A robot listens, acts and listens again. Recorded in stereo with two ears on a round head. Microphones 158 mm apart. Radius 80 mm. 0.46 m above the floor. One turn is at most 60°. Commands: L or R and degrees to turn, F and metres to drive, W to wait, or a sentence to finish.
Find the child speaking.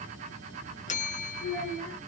L60
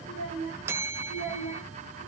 L40
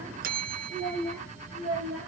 Facing the child speaking, over 4 m away.